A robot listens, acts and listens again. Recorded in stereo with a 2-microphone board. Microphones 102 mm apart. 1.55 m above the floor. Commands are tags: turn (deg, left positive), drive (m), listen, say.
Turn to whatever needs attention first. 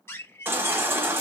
<turn deg="-20"/>
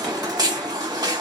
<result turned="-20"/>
<turn deg="-135"/>
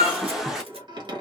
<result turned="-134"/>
<say>Found it: a baby crying, straight ahead.</say>